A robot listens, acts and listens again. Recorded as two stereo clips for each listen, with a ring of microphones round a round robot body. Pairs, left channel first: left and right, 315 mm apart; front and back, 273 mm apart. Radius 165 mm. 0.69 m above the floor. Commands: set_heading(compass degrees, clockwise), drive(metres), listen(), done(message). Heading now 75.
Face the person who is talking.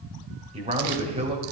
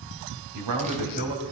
set_heading(235)
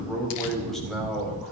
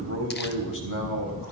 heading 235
done("Facing the man speaking.")